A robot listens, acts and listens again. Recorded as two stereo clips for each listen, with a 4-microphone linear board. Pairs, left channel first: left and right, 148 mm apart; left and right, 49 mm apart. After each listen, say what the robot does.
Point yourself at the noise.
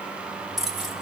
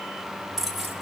Turn 30° left.
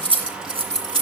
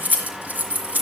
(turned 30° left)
Turn 40° right.
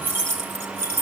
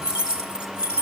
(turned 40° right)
Turn 20° right.
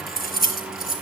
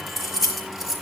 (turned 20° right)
Facing the keys jangling, over 4 m away.